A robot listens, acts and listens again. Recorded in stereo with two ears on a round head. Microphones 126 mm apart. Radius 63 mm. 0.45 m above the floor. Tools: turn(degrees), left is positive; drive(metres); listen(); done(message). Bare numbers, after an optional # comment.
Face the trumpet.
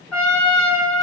turn(30)
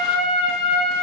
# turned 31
# So it is at 140° left.
turn(140)
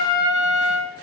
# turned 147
done("Facing the trumpet, under 1 m away.")